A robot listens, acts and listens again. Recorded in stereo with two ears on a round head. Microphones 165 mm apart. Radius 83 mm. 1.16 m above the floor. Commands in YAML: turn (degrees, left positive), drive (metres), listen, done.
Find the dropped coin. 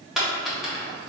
turn: 30
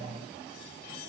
listen: true
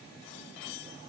done: "I heard a dropped coin, but can't make it out now. It was about 30° right or 150° left."